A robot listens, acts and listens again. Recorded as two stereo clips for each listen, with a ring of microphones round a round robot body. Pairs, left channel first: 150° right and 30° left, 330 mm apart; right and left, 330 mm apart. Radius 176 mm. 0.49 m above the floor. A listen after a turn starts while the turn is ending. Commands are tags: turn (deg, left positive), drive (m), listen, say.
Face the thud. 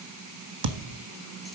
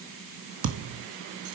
<turn deg="40"/>
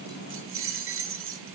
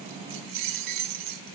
<say>I heard a thud from this way, but can't make it out now.</say>